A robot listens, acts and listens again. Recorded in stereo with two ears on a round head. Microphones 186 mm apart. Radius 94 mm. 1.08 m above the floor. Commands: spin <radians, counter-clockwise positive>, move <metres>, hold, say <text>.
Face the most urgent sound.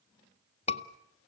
spin 0.52
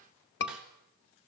spin 2.09
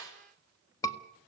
spin 0.26
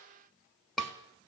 say Facing the scream.